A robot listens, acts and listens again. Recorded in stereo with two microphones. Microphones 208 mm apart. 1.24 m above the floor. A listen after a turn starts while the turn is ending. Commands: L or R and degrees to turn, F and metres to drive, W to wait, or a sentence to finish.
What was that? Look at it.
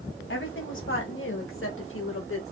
L75
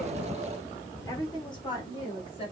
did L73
L25
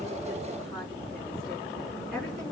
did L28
W
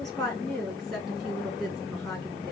Facing the woman speaking.